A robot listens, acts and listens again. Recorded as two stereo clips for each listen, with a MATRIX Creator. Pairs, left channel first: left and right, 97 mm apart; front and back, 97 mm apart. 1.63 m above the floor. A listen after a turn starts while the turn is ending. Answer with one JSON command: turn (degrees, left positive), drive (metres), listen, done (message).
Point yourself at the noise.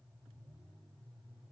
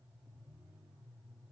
{"listen": true}
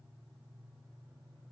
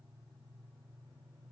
{"listen": true}
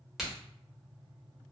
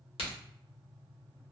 {"done": "Found it: a crack, straight ahead, 1 to 2 m away."}